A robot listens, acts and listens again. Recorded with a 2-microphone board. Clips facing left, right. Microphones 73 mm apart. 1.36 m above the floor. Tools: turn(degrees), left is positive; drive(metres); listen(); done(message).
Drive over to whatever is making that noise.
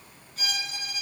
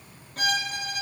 turn(degrees=-50)
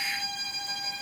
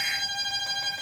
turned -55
turn(degrees=-70)
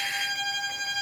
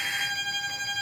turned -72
drive(metres=1.0)
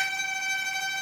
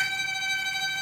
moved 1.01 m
drive(metres=1.0)
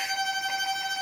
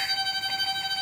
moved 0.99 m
turn(degrees=10)
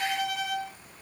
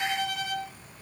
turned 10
drive(metres=1.0)
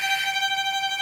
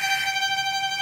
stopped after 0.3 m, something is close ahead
done("I am next to the violin.")